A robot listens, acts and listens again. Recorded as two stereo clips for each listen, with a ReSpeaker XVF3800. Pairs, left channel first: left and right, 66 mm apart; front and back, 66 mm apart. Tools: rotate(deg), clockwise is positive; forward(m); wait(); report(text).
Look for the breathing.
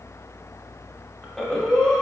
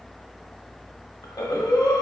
rotate(-10)
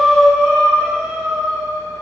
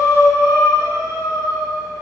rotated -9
report("Facing the breathing, under 1 m away.")